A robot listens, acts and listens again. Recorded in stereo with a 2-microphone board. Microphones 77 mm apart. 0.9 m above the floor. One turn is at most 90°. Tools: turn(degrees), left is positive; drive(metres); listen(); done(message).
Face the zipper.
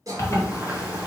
turn(degrees=40)
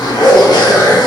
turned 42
turn(degrees=90)
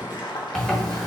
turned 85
done("Facing the zipper.")